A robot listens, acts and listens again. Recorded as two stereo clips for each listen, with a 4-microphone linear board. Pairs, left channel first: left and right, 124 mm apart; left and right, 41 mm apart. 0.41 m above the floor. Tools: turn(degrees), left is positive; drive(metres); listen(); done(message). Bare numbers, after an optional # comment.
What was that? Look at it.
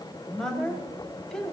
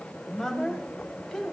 turn(30)
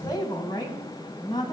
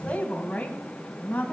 # So it is at 145° left.
turn(145)
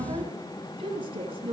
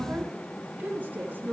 # The woman speaking is now 45° right.
turn(-45)
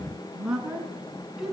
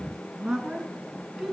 done("Found it: a woman speaking, straight ahead, over 4 m away.")